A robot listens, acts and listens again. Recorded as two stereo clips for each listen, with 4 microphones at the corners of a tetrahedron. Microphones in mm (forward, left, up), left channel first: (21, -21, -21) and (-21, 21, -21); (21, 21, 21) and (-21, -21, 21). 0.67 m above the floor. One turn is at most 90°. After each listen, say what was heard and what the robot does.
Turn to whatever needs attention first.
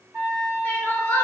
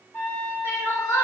The crying: 10° left. Turn 10° left.
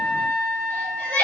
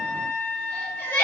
Facing the crying.